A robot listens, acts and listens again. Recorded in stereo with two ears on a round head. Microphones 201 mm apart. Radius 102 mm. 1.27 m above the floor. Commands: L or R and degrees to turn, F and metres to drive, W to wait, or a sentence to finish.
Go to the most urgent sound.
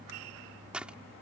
W
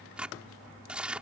W
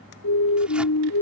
L90
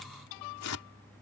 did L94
W
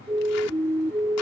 R10
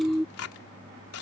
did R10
F1.0
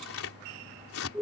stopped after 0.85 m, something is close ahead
Blocked. The siren is further on, straight ahead.